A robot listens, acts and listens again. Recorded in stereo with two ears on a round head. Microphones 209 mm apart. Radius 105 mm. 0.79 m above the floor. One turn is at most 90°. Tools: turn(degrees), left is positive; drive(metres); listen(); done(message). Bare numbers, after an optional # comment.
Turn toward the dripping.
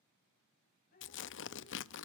# The dripping: about 45° left or 135° left.
turn(45)
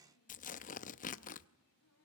# So it is at 90° left.
turn(90)
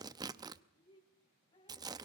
# The dripping is now 20° left.
turn(20)
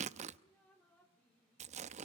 done("Facing the dripping, 2 to 4 m away.")